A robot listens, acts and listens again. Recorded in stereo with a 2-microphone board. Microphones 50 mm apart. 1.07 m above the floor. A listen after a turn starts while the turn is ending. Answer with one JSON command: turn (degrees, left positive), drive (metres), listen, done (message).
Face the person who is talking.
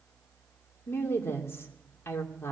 {"turn": 50}
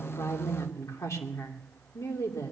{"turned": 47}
{"turn": 85}
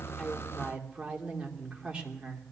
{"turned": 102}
{"turn": -20}
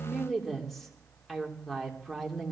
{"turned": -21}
{"done": "Found it: a woman speaking, straight ahead."}